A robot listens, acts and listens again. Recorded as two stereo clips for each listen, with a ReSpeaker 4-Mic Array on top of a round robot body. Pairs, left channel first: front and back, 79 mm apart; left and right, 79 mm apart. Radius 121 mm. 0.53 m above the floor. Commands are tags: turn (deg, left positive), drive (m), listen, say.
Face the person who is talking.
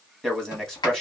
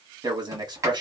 <turn deg="-85"/>
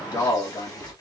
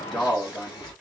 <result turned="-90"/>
<say>Found it: a man speaking, straight ahead.</say>